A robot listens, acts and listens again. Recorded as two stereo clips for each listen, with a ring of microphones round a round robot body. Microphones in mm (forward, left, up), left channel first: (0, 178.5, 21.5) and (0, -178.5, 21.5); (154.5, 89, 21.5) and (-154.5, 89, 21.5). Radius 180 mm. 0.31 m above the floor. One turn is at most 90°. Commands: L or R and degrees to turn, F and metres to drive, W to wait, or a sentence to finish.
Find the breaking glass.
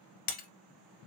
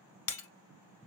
L25
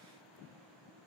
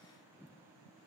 I heard breaking glass from this way, but can't make it out now.